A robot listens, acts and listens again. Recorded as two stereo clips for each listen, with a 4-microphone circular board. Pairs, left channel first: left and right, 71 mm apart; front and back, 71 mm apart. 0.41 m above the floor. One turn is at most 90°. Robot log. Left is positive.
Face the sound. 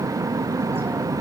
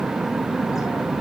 cmd idle
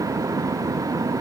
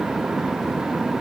cmd idle
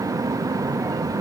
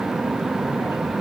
end: I can't make out anything.